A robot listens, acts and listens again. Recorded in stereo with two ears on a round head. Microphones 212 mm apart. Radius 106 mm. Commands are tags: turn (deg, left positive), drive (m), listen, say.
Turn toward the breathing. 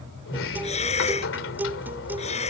<turn deg="30"/>
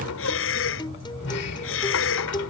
<turn deg="120"/>
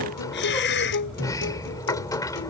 <turn deg="50"/>
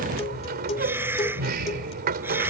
<turn deg="-10"/>
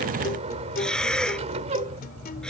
<say>Facing the breathing.</say>